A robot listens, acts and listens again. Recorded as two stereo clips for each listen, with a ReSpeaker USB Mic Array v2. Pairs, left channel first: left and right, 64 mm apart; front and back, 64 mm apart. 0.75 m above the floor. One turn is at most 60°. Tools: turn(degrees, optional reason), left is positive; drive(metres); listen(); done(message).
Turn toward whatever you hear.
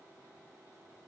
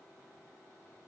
listen()
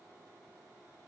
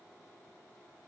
listen()
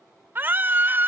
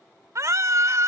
turn(degrees=-60, reason="The scream: 145° right.")
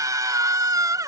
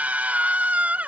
turn(degrees=-60, reason="The scream is now 115° right.")
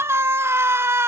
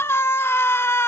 turn(degrees=-45, reason="The scream is now 45° right.")
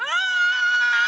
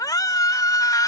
done("Found it: a scream, straight ahead.")